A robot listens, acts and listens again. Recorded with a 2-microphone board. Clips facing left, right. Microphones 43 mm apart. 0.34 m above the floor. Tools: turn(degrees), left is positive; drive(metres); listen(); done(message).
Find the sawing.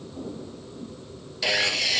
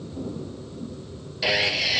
turn(degrees=-30)
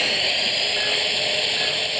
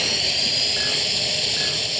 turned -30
turn(degrees=25)
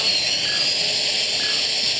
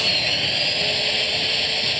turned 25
turn(degrees=-15)
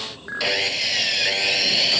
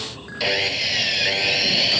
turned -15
done("Facing the sawing.")